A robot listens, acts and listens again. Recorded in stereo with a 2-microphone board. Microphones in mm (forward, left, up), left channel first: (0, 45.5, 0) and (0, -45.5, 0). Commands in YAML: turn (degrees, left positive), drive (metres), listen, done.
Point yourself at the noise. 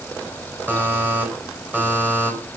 turn: -20
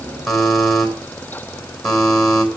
done: "Found it: a buzzer, straight ahead, over 4 m away."